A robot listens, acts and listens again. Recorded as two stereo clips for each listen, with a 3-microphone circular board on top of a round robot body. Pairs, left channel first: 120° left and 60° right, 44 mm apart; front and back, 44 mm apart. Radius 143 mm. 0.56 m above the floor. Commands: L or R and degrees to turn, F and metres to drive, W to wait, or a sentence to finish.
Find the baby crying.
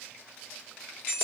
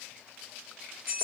W
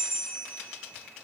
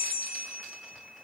W
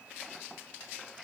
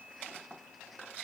I can't make out a baby crying to turn to.